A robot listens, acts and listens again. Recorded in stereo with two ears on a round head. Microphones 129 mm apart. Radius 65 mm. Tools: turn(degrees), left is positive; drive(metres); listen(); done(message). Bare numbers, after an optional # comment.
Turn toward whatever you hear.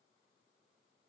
listen()
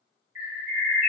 turn(-30)
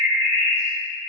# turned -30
# So it is at 135° right.
turn(-135)
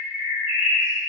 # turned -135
# The bird is now 10° left.
turn(10)
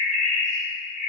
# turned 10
done("Found it: a bird, straight ahead, 1 to 2 m away.")